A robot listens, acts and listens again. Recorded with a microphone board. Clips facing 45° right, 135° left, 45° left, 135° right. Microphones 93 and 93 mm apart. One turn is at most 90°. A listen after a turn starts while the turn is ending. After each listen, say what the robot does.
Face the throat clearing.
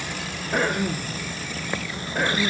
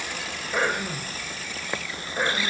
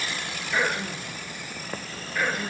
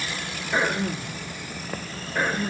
Turn 75° right.
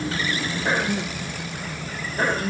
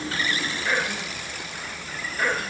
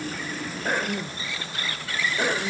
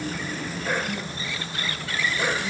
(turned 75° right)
Found it: throat clearing, straight ahead.